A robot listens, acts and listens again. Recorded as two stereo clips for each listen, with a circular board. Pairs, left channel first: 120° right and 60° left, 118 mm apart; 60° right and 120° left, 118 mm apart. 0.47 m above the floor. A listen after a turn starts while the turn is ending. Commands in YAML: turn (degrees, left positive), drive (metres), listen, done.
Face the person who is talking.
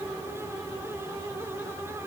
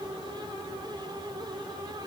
listen: true
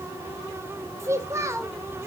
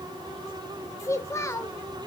done: "Found it: a child speaking, straight ahead, under 1 m away."